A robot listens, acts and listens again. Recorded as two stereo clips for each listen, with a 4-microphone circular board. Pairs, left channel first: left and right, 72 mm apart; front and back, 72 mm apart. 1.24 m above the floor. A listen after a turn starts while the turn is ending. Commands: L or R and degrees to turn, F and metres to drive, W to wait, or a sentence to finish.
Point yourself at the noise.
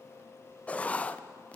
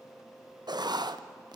L160
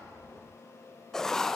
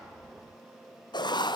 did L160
Facing the writing.